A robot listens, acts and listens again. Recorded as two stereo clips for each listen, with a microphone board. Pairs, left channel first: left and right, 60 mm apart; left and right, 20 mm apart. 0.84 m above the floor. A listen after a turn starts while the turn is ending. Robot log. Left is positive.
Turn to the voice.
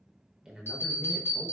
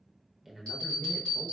cmd yaw -30
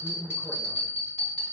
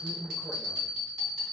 cmd idle
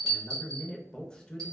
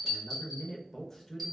note: So it is at 20° left.
cmd yaw +20
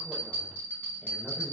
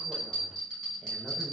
cmd idle
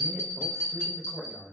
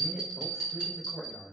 end: Facing the man speaking, under 1 m away.